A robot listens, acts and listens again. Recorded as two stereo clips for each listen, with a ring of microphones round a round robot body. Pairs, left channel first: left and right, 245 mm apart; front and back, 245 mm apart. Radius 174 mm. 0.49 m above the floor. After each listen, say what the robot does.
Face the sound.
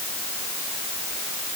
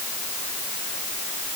Keep listening.
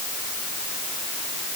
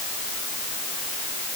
Keep listening.
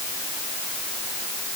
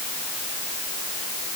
I can't make out anything.